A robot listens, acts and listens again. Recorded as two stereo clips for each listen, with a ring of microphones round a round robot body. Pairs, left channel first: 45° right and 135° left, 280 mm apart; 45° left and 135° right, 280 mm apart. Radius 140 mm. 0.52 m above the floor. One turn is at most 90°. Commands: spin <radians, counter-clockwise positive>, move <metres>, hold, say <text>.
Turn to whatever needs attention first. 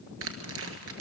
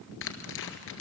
hold
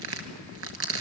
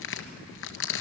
hold
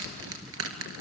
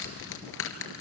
say I can't make out anything urgent, only tearing paper.